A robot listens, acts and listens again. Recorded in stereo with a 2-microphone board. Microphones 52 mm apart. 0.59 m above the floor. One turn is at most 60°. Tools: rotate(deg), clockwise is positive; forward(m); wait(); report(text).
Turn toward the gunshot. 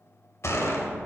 rotate(-60)
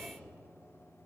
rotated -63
wait()
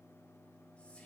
report("I heard a gunshot, but can't make it out now. It was about 5° left or 50° left.")